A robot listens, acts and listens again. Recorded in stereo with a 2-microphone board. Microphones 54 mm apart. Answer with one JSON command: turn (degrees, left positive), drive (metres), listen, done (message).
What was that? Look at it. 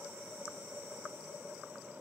{"listen": true}
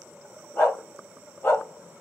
{"turn": 45}
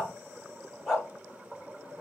{"turn": 10}
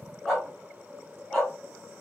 {"done": "Facing the dog barking, 2 to 4 m away."}